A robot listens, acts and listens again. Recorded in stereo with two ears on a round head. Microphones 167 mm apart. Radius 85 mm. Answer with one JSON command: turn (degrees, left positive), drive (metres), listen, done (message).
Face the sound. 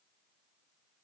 {"listen": true}
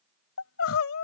{"turn": 90}
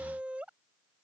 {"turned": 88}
{"done": "Found it: crying, straight ahead."}